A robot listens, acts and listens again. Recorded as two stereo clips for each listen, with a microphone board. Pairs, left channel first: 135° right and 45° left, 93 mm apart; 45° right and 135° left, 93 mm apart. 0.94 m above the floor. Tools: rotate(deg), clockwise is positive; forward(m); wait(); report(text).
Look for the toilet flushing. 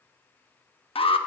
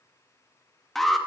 wait()
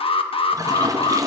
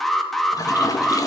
report("Found it: a toilet flushing, straight ahead, under 1 m away.")